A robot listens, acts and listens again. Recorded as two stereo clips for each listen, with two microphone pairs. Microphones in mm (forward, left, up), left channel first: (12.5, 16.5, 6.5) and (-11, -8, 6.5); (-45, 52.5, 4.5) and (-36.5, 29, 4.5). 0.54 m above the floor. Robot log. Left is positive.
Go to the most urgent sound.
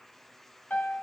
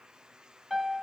cmd idle
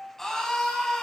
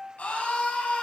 note: The scream: 125° left.
cmd yaw +125
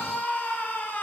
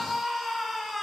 note: The scream is now 25° left.
cmd yaw +25
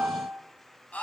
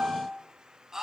cmd fwd 1.0
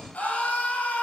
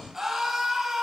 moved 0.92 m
note: The scream is now 10° left.
cmd yaw +10
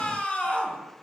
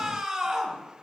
cmd fwd 1.0
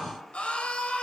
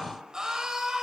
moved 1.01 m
cmd fwd 1.0
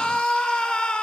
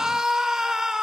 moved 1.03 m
cmd fwd 1.0
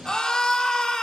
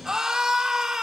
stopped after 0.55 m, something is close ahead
note: The scream is now 15° right.
cmd yaw -15
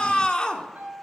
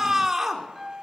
end: I am next to the scream.